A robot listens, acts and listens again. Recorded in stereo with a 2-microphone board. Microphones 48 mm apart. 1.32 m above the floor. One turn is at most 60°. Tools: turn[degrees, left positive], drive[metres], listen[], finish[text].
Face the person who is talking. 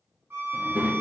Thought: The child speaking: about 40° right or 140° right.
Action: turn[-40]
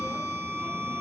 Action: listen[]
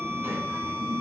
Thought: So it is at 95° right.
Action: turn[-60]
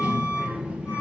Thought: The child speaking is now 25° right.
Action: turn[-25]
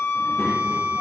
Action: listen[]
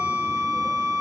Action: listen[]
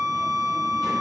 Action: finish[Facing where the child speaking came from. I can't hear it now.]